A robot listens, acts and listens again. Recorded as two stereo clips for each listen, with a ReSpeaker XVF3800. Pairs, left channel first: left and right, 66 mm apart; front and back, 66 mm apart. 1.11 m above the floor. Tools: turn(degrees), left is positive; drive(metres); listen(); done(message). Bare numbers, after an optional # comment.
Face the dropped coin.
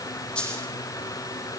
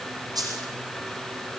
# The dropped coin: 165° left.
turn(165)
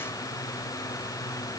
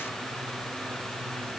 done("Facing where the dropped coin came from. I can't hear it now.")